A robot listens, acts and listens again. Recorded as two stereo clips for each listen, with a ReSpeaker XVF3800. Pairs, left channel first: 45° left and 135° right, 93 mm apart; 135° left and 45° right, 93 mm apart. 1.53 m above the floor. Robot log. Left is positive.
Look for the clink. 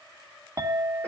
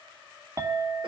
note: The clink: 90° right.
cmd yaw -90
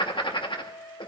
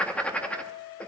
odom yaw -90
end: Found it: a clink, straight ahead, 1 to 2 m away.